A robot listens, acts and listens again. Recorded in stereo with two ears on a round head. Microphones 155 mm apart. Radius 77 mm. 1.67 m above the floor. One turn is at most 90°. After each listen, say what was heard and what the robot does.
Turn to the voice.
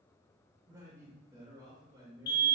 The man speaking: about 20° right or 160° right. Turn 20° right.
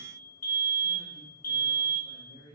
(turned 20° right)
So it is at 140° right. Turn 90° right.
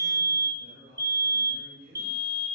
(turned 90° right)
The man speaking is now 50° right. Turn 50° right.
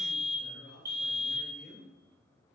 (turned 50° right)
Facing the man speaking, 2 to 4 m away.